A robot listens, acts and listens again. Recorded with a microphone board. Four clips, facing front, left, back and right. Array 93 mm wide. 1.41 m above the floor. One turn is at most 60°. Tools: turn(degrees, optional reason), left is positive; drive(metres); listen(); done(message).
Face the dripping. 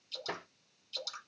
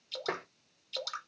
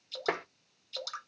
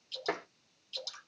turn(degrees=60, reason="The dripping: 120° left.")
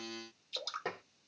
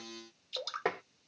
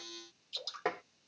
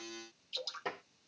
turn(degrees=60, reason="The dripping is now 60° left.")
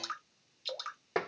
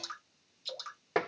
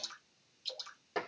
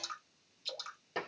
done("Found it: dripping, straight ahead.")